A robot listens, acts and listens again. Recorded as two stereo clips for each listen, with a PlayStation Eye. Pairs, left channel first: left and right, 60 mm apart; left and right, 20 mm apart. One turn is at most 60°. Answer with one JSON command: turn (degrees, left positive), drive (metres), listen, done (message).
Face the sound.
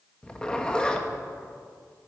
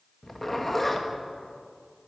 {"turn": 30}
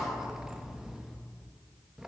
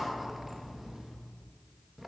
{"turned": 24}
{"turn": -10}
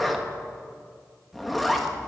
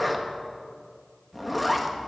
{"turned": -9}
{"done": "Facing the zipper."}